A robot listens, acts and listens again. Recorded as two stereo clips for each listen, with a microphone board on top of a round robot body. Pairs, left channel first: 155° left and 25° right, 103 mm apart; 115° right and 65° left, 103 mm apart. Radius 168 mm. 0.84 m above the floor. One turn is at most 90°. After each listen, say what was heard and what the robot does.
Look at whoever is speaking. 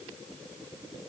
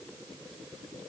Keep listening.
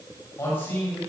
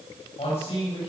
The man speaking: 135° right. Turn 90° right.
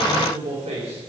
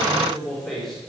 The man speaking is now 25° right. Turn 25° right.
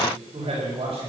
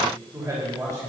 The man speaking is now 10° left. Turn 10° left.
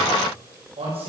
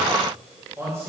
Found it: a man speaking, straight ahead.